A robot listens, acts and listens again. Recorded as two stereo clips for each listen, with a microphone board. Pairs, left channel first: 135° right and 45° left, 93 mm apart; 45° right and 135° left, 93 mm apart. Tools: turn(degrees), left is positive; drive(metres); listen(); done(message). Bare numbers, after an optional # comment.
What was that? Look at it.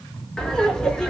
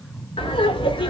# The laughter: 50° right.
turn(-50)
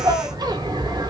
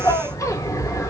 # The laughter is now 10° left.
turn(10)
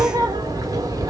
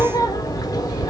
done("Facing the laughter, 1 to 2 m away.")